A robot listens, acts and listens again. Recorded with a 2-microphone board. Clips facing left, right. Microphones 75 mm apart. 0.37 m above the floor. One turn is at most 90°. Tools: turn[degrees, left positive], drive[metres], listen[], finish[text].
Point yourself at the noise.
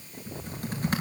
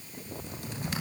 Thought: The typing on a keyboard: about 45° left or 135° left.
Action: turn[45]
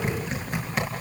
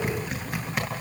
Action: finish[Found it: typing on a keyboard, straight ahead.]